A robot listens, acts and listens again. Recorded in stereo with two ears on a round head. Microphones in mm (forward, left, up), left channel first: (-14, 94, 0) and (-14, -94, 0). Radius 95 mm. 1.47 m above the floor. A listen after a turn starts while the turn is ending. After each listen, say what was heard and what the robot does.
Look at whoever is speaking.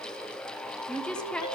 Turn 30° left.
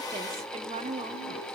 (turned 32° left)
So it is at 30° right. Turn 30° right.
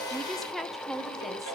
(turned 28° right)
Facing the woman speaking, 1 to 2 m away.